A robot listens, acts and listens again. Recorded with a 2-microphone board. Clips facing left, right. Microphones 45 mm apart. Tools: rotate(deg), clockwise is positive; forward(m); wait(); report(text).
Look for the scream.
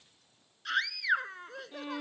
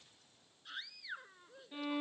rotate(-90)
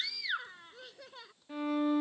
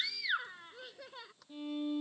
report("Facing the scream.")